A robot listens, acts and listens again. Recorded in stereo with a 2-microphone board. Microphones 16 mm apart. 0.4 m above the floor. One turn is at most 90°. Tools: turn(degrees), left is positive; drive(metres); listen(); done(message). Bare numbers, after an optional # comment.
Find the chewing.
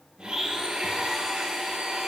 listen()
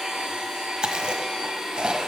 # The chewing: about 65° right or 115° right.
turn(-65)
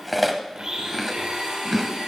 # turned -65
done("Found it: chewing, straight ahead, 1 to 2 m away.")